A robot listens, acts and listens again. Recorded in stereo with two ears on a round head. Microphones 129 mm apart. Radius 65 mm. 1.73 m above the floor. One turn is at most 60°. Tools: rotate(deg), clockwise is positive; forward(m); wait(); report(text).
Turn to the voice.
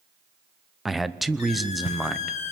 rotate(-30)
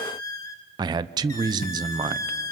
rotate(30)
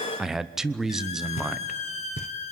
report("Facing the man speaking, under 1 m away.")